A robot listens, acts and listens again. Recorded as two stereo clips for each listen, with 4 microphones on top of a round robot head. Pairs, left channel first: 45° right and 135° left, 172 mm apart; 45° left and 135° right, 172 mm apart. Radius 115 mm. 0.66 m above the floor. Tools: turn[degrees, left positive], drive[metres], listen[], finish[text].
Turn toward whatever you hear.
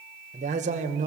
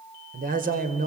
Thought: The man speaking: 175° right.
Action: turn[-175]
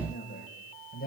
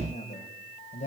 Thought: The man speaking is now 10° right.
Action: turn[-10]
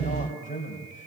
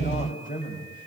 Action: finish[Facing the man speaking.]